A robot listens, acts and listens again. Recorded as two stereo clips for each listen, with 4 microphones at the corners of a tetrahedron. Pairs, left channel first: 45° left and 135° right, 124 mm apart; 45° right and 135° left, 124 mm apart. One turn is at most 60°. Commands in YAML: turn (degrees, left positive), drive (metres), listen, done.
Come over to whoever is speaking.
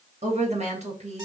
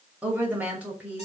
turn: -60
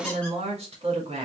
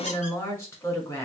turn: -60
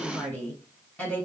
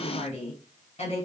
turn: -30
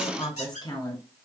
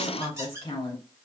drive: 1.0
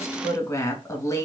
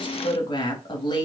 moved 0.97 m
turn: -10
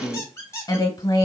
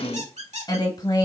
drive: 1.0
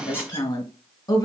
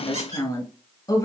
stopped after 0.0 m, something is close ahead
done: "I am next to the woman speaking."